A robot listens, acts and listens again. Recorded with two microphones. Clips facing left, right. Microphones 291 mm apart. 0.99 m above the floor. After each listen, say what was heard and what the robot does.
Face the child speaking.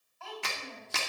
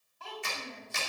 The child speaking: about 40° right or 140° right. Turn 40° right.
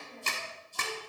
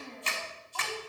So it is at 100° right. Turn 100° right.
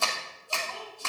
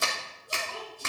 The child speaking is now 35° right. Turn 35° right.
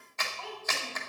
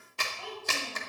The child speaking is now 15° right. Turn 15° right.
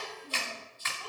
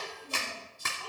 Facing the child speaking.